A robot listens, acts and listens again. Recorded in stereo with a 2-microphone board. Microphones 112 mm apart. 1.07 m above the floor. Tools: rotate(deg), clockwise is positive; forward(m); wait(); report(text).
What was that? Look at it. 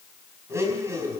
rotate(25)
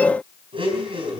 rotate(125)
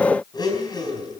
rotate(-40)
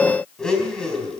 report("Facing the blender, over 4 m away.")